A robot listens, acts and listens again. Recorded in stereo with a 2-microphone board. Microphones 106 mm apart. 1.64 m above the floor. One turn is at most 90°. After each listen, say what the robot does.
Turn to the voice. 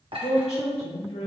Turn 70° left.
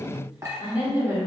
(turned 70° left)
Turn 20° right.
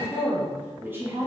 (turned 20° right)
Turn 25° right.
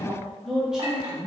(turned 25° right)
Turn 10° right.
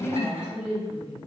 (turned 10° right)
Turn 10° right.
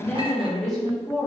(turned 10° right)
Facing the woman speaking.